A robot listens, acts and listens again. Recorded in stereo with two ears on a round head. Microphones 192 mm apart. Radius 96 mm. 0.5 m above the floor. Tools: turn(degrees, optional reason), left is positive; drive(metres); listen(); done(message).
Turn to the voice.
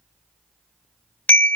listen()
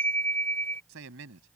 turn(degrees=-65, reason="The man speaking: about 65° right or 115° right.")
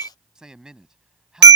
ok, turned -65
done("Found it: a man speaking, straight ahead.")